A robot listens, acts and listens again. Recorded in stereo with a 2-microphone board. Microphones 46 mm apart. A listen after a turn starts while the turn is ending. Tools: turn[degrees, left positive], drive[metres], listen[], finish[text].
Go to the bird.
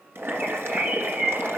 Thought: The bird: about 35° right or 145° right.
Action: turn[-35]
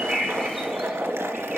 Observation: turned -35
Action: listen[]
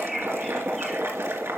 Action: drive[1.0]
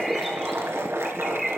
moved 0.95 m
Action: drive[1.0]
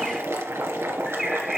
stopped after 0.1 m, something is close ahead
Action: finish[Arrived at the bird, straight ahead.]